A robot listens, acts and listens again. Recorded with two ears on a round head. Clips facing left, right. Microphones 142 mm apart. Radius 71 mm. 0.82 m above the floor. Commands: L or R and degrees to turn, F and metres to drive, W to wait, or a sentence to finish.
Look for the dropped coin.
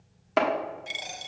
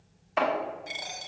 L30
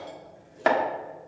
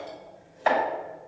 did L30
W
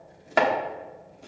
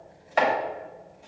I heard a dropped coin, but can't make it out now. It was about straight ahead or 120° left.